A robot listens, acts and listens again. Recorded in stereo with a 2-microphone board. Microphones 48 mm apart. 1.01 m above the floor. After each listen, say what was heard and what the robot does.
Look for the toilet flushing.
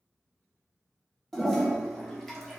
Turn 30° left.
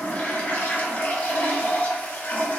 So it is at 140° left. Turn 140° left.
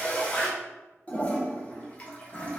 The toilet flushing is now 30° left. Turn 30° left.
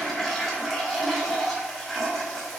Facing the toilet flushing, 1 to 2 m away.